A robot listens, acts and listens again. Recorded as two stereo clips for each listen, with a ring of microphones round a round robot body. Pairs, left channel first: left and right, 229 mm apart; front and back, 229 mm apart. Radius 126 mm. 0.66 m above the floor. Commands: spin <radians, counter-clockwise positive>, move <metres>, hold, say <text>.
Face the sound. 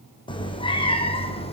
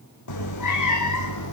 spin 0.44
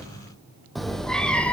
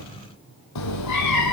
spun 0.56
say Found it: a cat meowing, straight ahead.